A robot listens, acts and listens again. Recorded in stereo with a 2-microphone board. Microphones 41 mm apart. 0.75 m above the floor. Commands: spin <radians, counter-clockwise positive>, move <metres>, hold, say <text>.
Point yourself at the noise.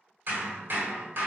spin -0.96
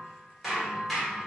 say Facing the hammering, 1 to 2 m away.